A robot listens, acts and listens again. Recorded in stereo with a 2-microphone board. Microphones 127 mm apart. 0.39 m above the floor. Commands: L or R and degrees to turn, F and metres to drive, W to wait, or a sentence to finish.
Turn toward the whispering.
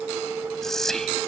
L30
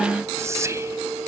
R25
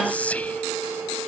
L10
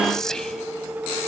Facing the whispering.